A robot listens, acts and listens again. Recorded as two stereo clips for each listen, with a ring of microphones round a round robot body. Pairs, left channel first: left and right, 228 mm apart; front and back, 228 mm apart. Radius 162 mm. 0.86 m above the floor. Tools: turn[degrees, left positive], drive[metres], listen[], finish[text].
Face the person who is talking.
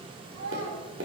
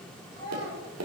Thought: The child speaking: 70° right.
Action: turn[-70]
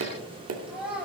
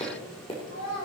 Action: finish[Facing the child speaking, over 4 m away.]